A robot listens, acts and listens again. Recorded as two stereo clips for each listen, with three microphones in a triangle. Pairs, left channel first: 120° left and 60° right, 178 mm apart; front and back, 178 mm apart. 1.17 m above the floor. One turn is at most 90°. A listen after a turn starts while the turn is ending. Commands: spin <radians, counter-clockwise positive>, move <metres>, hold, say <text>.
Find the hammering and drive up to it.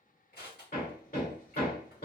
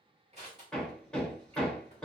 spin 1.48
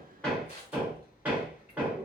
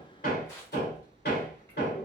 spin 0.35
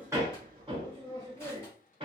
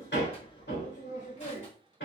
move 1.0
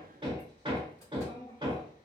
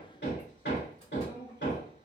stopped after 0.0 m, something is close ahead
say Blocked. The hammering is further on, straight ahead.